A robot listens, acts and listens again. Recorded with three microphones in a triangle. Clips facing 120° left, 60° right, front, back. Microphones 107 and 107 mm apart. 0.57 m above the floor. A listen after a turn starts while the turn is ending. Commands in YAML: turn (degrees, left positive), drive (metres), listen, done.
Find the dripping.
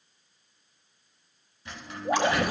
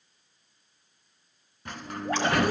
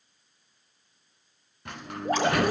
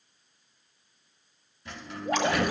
turn: 45
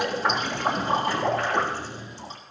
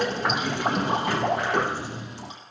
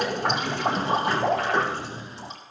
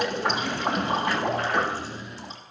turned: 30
turn: 10
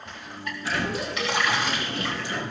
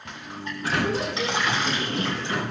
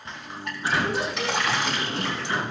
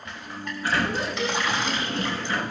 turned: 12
done: "Found it: dripping, straight ahead, 2 to 4 m away."